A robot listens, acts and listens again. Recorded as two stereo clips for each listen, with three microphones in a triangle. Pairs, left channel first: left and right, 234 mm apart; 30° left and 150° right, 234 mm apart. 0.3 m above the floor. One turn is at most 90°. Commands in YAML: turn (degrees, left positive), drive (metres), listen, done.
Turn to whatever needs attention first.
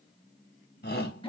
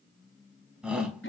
turn: 90
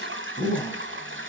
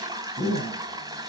turn: 20
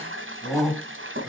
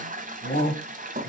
done: "Facing the shout."